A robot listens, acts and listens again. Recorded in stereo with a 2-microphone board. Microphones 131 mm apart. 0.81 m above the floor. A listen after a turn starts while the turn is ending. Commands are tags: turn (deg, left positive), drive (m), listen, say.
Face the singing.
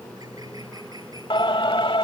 <turn deg="40"/>
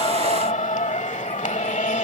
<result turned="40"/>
<turn deg="95"/>
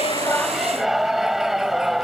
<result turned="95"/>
<say>Facing the singing.</say>